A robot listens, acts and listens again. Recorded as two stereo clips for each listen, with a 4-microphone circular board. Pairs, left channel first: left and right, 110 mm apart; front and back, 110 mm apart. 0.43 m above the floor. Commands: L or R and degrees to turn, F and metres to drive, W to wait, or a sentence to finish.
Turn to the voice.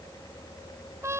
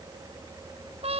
W
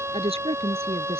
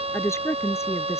R65
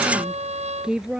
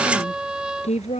Facing the woman speaking.